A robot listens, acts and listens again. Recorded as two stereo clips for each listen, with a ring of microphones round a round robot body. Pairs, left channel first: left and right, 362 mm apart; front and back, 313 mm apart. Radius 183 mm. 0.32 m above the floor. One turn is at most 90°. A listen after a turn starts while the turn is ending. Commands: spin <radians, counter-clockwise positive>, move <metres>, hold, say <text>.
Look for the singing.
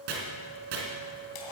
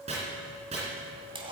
hold
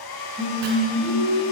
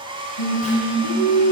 spin -0.17
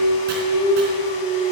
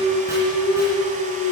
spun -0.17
spin 0.35
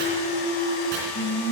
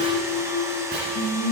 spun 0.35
spin 0.61
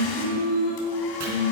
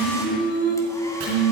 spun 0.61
spin 0.79
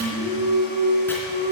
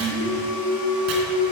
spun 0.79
spin -0.17
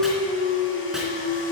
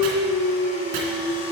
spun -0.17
say Facing the singing, 1 to 2 m away.